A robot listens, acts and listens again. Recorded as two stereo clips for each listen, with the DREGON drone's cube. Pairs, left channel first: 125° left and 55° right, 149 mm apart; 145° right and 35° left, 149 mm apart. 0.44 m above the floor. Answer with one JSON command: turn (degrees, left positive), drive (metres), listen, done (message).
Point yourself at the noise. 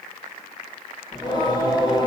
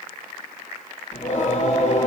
{"turn": 180}
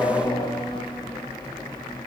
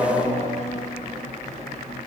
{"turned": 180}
{"turn": 65}
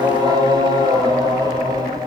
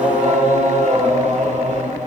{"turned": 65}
{"done": "Found it: singing, straight ahead, 1 to 2 m away."}